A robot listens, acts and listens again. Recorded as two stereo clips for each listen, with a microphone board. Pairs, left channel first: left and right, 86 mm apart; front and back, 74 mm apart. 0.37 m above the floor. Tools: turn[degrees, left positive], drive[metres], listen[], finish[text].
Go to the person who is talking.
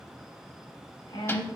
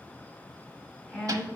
Thought: The woman speaking: 90° left.
Action: turn[90]
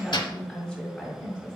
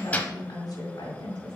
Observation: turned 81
Thought: The woman speaking is now 10° left.
Action: turn[10]
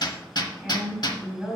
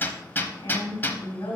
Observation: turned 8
Action: drive[1.0]
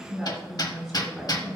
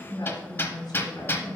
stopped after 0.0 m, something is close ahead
Action: finish[Blocked. The woman speaking is further on, straight ahead.]